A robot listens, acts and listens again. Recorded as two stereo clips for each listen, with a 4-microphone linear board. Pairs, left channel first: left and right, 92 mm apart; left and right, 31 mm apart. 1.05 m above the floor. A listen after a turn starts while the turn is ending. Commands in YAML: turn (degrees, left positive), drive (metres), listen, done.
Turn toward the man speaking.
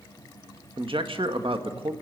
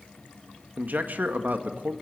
turn: -65
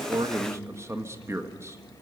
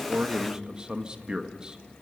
turn: -30
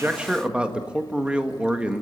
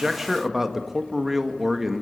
turn: -10
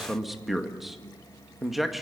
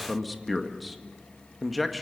done: "Facing the man speaking."